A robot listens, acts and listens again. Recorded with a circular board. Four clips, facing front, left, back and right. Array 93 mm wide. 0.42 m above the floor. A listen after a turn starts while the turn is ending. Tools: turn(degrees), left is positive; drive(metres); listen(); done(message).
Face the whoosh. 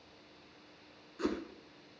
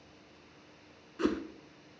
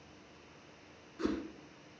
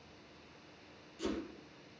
turn(degrees=85)
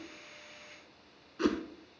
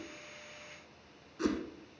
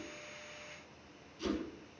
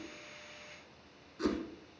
turn(degrees=10)
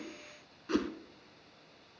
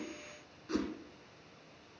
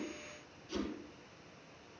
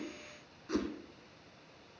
done("Found it: a whoosh, straight ahead.")